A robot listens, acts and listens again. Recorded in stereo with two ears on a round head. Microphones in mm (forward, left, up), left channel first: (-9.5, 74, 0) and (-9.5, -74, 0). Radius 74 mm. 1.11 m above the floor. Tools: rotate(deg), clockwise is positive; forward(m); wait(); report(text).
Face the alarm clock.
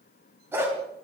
wait()
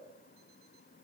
wait()
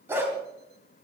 report("I can't make out an alarm clock, only a dog barking.")